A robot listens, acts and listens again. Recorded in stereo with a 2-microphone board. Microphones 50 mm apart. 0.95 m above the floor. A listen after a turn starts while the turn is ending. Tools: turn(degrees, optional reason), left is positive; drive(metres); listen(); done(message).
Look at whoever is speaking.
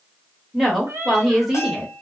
turn(degrees=-30)
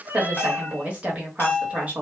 turn(degrees=-150, reason="So it is at 150° right.")
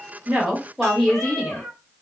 done("Found it: a woman speaking, straight ahead.")